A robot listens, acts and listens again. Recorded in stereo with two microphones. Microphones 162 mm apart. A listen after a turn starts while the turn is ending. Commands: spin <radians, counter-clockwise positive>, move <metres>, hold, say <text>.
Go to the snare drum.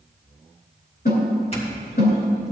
spin 1.57
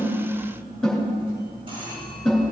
move 1.0
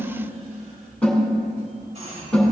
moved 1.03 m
move 1.0
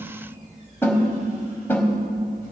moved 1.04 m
spin 0.26
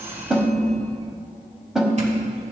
move 1.0
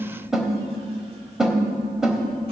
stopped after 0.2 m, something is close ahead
say I am next to the snare drum.